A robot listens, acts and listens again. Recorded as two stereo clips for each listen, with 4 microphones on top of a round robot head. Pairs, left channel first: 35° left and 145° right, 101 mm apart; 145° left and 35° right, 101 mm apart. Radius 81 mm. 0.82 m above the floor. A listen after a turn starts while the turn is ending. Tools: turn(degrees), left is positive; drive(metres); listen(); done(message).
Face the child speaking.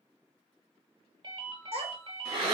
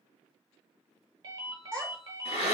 turn(degrees=-135)
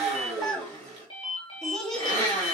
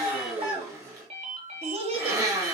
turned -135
turn(degrees=-45)
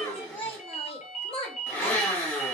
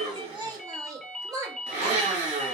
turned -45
turn(degrees=15)
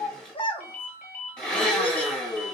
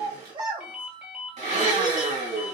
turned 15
done("Found it: a child speaking, straight ahead.")